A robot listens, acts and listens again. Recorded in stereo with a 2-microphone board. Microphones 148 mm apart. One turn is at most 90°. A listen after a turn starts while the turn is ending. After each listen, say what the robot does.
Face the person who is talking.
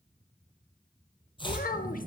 Turn 70° left.
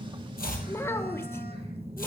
Turn 20° left.
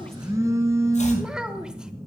Found it: a child speaking, straight ahead, under 1 m away.